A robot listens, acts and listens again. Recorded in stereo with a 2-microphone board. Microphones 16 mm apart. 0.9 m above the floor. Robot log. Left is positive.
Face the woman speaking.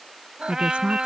cmd yaw -90
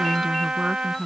note: So it is at 20° right.
cmd yaw -20
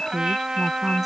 end: Facing the woman speaking.